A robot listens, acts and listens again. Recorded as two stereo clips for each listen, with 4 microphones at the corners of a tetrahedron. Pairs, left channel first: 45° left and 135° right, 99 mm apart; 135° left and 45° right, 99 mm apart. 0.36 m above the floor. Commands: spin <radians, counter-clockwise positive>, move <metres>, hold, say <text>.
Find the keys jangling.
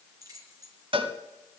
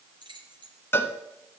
spin -1.40
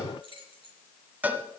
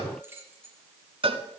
spin 0.35
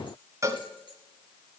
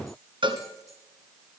hold
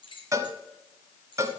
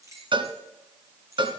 spin 0.26
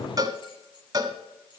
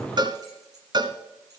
say Facing the keys jangling, over 4 m away.